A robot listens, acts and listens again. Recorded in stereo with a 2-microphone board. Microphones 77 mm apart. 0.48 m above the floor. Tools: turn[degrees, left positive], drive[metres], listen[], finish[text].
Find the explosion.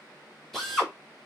Action: listen[]
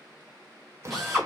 Thought: The explosion: about 40° right or 140° right.
Action: turn[-40]
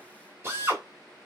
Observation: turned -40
Action: listen[]
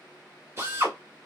Action: finish[I heard an explosion, but can't make it out now. It was about straight ahead or 100° right.]